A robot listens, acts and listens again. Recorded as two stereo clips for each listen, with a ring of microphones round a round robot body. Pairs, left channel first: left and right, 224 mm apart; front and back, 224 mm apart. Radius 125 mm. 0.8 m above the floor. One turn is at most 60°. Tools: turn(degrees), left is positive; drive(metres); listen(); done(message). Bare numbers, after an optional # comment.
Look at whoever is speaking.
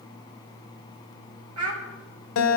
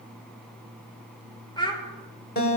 # The child speaking: 70° right.
turn(-60)
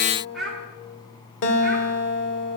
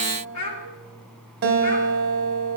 done("Found it: a child speaking, straight ahead, 2 to 4 m away.")